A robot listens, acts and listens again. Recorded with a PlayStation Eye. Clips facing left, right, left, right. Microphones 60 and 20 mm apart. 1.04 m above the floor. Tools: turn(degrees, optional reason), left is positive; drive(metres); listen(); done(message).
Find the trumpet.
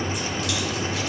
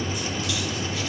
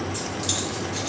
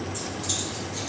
listen()
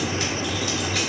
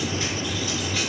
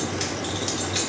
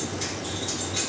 listen()
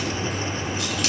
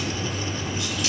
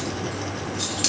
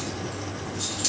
done("I can't make out a trumpet.")